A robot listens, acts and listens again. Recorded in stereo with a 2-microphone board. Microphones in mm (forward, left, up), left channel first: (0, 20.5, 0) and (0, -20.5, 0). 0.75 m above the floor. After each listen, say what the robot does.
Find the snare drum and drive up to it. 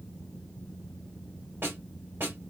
Turn 70° right.
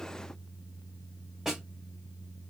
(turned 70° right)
Turn 10° right.
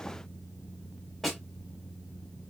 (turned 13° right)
Drive 1.0 m forward.
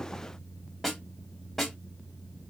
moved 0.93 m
Drive 1.0 m forward.
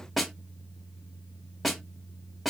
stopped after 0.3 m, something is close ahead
Arrived at the snare drum, straight ahead.